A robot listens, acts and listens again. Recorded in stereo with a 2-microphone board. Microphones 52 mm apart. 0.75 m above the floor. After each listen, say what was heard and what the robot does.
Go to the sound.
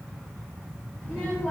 The child speaking: about 15° left or 165° left. Turn 15° left.
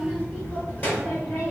So it is at 150° left. Turn 150° left.
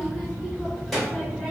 Drive 1.0 m forward.
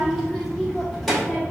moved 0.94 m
Drive 1.0 m forward.
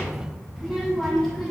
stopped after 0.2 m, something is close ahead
I am next to the child speaking.